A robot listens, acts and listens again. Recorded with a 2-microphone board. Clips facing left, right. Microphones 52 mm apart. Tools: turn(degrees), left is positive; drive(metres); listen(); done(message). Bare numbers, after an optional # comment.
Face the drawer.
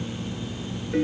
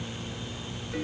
listen()
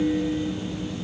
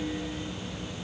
listen()
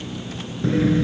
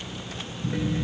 turn(90)
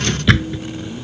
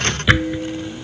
# So it is at 10° right.
turn(-10)
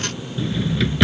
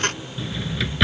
done("Found it: a drawer, straight ahead.")